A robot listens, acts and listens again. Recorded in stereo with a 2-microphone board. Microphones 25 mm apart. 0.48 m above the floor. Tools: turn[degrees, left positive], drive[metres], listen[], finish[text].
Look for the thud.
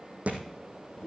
Thought: The thud: about 60° right or 120° right.
Action: turn[-60]
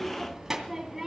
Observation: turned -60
Action: listen[]
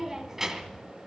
Action: finish[I heard a thud, but can't make it out now. It was about straight ahead or 60° right.]